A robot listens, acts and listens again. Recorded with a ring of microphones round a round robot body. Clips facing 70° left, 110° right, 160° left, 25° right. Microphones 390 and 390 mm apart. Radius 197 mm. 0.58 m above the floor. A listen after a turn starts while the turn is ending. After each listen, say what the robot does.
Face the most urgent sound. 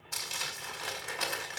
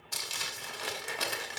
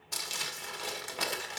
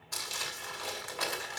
Keep listening.
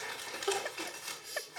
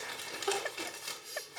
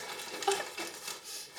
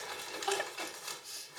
Turn 160° left.
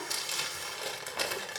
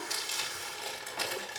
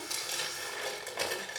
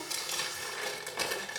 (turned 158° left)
Keep listening.
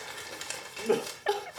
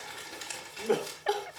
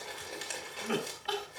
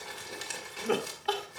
Facing the crying.